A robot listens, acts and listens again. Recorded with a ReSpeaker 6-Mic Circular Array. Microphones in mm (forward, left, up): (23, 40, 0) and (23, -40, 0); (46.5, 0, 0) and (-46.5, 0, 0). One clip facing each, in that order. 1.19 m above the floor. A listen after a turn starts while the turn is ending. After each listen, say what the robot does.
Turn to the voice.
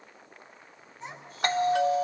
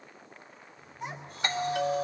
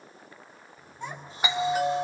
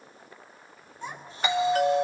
Turn 10° right.
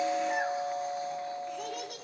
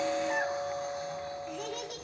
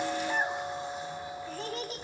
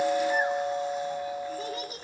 Facing the child speaking, over 4 m away.